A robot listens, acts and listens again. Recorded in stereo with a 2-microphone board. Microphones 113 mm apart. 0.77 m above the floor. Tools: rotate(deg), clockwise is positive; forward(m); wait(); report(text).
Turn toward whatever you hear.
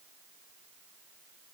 wait()
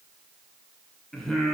rotate(30)
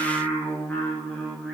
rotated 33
rotate(-30)
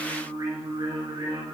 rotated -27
rotate(40)
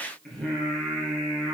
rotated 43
report("Found it: singing, straight ahead.")